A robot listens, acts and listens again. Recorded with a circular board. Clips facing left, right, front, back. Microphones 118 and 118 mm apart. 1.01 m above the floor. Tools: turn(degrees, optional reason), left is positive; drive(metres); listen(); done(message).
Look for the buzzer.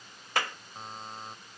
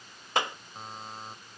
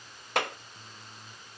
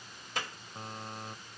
turn(degrees=180, reason="The buzzer: straight behind.")
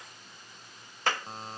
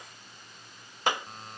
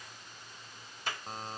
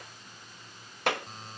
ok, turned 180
turn(degrees=40, reason="The buzzer is now 40° left.")
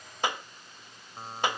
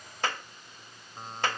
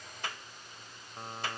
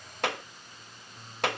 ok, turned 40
done("Found it: a buzzer, straight ahead.")